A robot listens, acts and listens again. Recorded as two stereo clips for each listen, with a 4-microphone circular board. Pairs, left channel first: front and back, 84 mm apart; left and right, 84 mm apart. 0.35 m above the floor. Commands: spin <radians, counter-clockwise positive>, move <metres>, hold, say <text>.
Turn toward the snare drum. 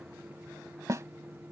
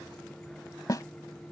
spin 2.27
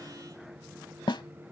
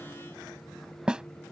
spin -0.17
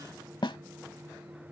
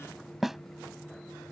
say Found it: a snare drum, straight ahead.